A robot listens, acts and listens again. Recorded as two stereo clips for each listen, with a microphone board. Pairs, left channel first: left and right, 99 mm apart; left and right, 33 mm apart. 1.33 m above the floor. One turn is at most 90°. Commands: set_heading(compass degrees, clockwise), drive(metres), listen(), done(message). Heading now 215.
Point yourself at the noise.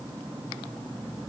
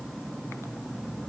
listen()
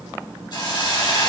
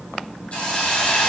set_heading(170)
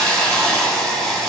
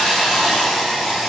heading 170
done("Facing the hiss.")